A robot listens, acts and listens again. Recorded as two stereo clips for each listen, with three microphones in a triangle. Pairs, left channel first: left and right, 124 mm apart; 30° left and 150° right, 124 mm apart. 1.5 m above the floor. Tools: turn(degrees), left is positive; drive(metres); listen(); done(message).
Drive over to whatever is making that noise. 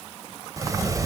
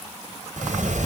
turn(degrees=-155)
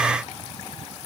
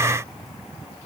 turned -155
listen()
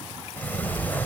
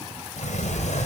turn(degrees=15)
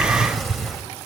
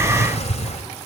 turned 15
drive(metres=1.0)
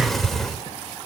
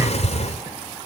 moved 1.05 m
drive(metres=1.0)
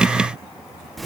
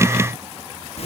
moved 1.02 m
drive(metres=1.0)
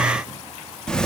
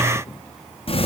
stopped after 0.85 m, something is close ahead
turn(degrees=10)
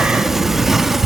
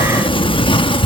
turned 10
done("I am next to the sliding door.")